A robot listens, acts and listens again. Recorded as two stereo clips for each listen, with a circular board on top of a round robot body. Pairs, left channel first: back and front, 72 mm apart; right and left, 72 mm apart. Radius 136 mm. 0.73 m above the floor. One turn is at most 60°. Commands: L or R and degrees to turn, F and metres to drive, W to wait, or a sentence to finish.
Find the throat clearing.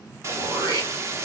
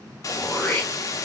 R15
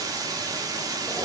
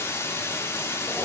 W
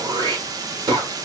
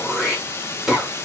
Facing the throat clearing.